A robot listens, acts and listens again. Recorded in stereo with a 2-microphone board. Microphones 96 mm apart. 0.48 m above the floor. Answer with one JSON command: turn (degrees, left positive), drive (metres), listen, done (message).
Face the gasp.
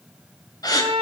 {"turn": 40}
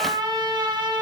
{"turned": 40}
{"listen": true}
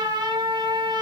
{"done": "I heard a gasp, but can't make it out now. It was about straight ahead or 100° left."}